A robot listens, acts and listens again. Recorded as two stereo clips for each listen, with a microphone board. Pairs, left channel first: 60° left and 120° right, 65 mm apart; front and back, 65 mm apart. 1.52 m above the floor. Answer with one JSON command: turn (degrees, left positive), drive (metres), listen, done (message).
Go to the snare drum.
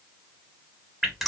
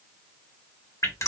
{"listen": true}
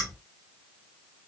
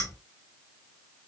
{"listen": true}
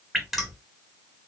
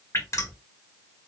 {"done": "I can't make out a snare drum to turn to."}